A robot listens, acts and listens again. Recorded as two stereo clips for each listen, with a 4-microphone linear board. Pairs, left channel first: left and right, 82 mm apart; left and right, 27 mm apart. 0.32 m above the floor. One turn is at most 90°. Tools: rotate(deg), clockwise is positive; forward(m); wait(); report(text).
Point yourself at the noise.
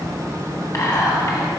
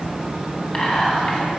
rotate(-35)
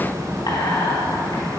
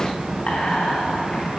rotate(-90)
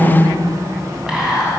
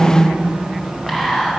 rotate(10)
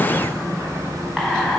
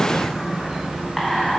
report("Facing the whispering, 2 to 4 m away.")